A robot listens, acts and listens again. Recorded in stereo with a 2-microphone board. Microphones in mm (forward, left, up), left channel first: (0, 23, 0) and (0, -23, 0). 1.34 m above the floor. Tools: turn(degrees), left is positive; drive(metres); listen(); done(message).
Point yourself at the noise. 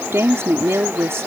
turn(degrees=-75)
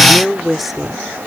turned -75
done("Facing the woman speaking.")